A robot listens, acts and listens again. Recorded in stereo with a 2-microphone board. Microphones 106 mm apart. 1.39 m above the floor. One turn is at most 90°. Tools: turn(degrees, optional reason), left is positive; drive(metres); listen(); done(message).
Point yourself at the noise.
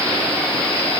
listen()
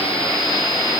listen()
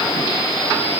done("I can't make out anything.")